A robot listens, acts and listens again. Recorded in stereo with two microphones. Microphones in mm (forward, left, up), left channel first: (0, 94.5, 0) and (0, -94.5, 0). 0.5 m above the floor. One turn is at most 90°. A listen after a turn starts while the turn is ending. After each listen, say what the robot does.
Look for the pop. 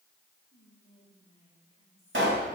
Turn 90° right.
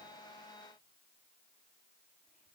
I heard a pop from this way, but can't make it out now.